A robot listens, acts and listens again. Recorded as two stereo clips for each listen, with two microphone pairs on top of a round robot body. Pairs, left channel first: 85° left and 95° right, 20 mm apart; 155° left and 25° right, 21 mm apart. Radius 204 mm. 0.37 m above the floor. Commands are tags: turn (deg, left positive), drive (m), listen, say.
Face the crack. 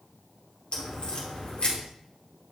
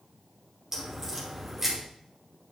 <turn deg="45"/>
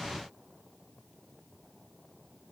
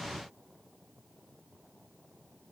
<say>Facing where the crack came from. I can't hear it now.</say>